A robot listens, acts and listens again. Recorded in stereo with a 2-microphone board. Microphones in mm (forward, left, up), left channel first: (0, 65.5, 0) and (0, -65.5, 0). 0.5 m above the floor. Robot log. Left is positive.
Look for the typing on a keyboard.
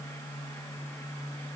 cmd idle
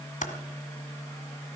note: The typing on a keyboard: about 75° left or 105° left.
cmd yaw +75
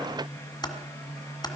note: So it is at 30° left.
cmd yaw +30
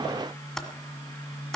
end: Facing the typing on a keyboard.